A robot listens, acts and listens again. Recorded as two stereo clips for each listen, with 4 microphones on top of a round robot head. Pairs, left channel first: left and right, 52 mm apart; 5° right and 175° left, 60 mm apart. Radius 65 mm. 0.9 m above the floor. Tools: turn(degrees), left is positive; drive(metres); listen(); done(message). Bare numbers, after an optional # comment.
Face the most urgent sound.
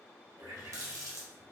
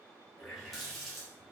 listen()
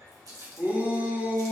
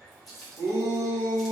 # The shout: 145° right.
turn(-145)
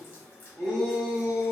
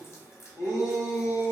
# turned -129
# The shout is now 15° right.
turn(-15)
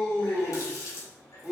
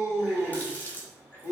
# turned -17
done("Facing the shout.")